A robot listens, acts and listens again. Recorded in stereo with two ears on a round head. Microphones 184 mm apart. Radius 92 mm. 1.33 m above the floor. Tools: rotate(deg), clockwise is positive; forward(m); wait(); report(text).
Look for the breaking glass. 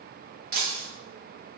rotate(50)
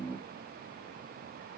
wait()
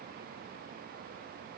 report("I heard breaking glass, but can't make it out now. It was about straight ahead or 80° right.")